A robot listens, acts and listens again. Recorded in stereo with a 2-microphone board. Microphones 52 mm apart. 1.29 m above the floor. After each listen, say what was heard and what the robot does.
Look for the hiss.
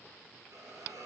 Turn 90° right.
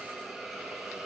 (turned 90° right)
Facing the hiss.